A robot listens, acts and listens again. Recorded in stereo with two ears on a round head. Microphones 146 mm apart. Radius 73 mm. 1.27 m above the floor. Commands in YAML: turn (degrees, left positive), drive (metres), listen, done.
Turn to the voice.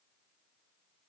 listen: true
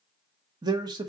turn: -25
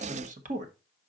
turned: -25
turn: -130
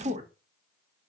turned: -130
turn: -40
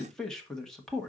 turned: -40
done: "Found it: a man speaking, straight ahead, 1 to 2 m away."